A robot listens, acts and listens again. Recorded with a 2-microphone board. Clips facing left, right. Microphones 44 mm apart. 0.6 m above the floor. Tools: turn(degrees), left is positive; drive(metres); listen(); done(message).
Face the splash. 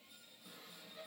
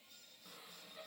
listen()
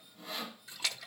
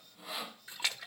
turn(degrees=-25)
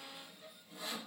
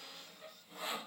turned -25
listen()
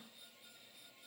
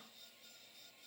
done("I heard a splash, but can't make it out now. It was about straight ahead or 130° right.")